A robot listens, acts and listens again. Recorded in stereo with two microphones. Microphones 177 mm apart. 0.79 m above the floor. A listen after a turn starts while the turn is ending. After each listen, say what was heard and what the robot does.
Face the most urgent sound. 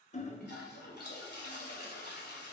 Keep listening.
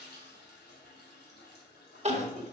The crying: about 40° right or 140° right. Turn 40° right.
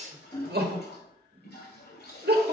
So it is at 95° right. Turn 95° right.
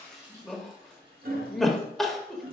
Found it: crying, straight ahead.